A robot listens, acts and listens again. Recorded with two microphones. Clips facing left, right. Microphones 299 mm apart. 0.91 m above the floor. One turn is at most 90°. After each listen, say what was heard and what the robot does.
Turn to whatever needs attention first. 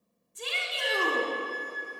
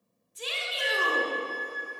The shout: about 60° left or 120° left. Turn 60° left.
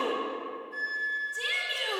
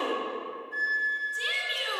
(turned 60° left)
So it is at 60° left. Turn 60° left.
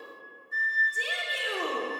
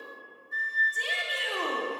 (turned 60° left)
The shout is now 10° left. Turn 10° left.
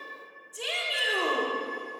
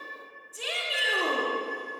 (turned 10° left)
Found it: a shout, straight ahead, 1 to 2 m away.